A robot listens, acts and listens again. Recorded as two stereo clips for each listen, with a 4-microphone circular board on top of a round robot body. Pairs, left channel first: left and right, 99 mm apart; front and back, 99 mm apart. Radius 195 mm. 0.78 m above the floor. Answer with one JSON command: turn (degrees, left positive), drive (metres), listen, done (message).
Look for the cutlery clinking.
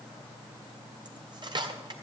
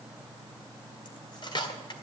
{"turn": -45}
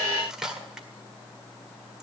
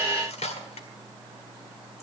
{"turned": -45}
{"done": "Found it: cutlery clinking, straight ahead, 1 to 2 m away."}